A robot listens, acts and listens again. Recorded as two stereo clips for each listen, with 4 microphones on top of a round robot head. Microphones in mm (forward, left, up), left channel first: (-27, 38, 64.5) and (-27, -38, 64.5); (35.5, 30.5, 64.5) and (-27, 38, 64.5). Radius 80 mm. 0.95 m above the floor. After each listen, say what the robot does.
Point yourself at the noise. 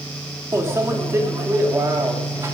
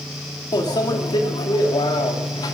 Turn 30° right.
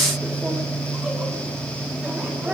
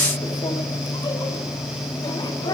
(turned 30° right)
Turn 10° right.
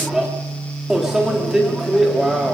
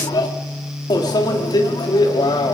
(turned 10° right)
Found it: a microwave, straight ahead, 1 to 2 m away.